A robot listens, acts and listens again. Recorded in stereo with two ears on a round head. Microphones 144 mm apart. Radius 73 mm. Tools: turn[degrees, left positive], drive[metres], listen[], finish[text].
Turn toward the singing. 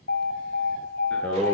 Action: turn[30]
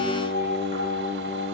Thought: So it is at 145° left.
Action: turn[145]
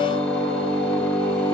Thought: The singing is now 25° left.
Action: turn[25]
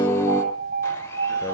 Thought: The singing is now 15° left.
Action: turn[15]
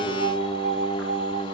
Action: finish[Facing the singing.]